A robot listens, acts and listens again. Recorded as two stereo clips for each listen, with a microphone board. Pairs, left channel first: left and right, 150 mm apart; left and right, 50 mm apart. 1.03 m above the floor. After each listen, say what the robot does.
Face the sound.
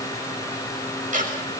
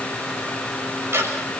Turn 60° right.
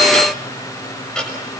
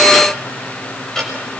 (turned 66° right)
Found it: ticking, straight ahead, over 4 m away.